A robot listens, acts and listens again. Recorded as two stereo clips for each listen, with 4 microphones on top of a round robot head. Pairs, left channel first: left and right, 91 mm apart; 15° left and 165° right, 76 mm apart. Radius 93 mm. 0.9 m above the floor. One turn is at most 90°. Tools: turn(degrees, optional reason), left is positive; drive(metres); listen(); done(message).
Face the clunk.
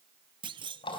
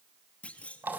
turn(degrees=-60, reason="The clunk: 60° right.")
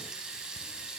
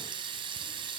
done("I heard a clunk from this way, but can't make it out now.")